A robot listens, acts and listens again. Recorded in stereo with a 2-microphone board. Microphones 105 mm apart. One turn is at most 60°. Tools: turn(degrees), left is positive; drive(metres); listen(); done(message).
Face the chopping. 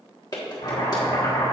turn(degrees=60)
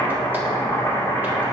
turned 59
turn(degrees=20)
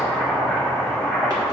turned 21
done("Found it: chopping, straight ahead.")